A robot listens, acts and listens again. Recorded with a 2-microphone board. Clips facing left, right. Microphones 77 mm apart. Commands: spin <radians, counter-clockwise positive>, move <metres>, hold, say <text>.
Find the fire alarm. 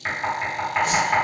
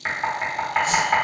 hold
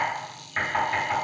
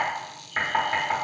hold
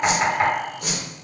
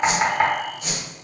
say I can't make out a fire alarm, only knocking and a whoosh.